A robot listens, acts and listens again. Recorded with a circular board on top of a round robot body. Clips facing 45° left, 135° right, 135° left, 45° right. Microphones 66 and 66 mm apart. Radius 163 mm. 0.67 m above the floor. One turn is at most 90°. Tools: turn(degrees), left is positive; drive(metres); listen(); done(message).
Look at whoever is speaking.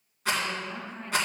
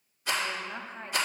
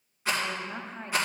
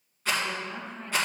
turn(degrees=90)
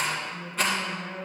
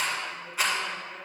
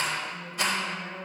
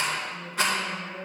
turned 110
turn(degrees=65)
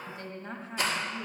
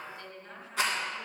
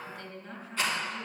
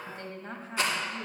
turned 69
done("Facing the woman speaking.")